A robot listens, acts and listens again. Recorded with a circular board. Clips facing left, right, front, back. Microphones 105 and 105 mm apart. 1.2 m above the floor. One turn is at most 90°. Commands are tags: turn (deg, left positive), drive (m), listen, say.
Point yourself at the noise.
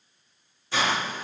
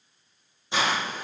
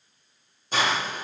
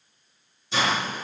<turn deg="-25"/>
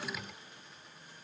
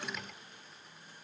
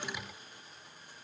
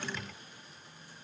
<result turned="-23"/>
<listen/>
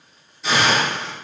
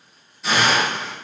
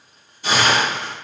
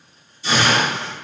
<say>Facing the hiss, under 1 m away.</say>